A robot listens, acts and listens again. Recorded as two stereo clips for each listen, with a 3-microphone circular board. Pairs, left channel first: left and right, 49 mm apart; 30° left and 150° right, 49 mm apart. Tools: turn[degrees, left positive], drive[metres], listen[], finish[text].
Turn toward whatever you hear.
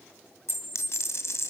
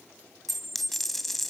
Thought: The dropped coin: 120° left.
Action: turn[120]
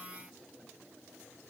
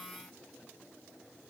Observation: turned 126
Action: finish[Facing where the dropped coin came from. I can't hear it now.]